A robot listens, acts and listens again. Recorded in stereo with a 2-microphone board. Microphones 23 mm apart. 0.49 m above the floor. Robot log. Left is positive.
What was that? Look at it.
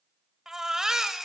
note: The baby crying: about 25° right or 155° right.
cmd yaw -25
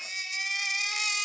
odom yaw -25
end: Facing the baby crying, under 1 m away.